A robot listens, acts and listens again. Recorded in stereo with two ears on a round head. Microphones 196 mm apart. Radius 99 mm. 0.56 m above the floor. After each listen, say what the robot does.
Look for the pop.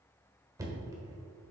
Keep listening.
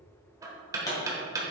Turn 15° left.
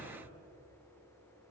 Keep listening.
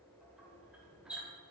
I heard a pop, but can't make it out now. It was about straight ahead or 150° left.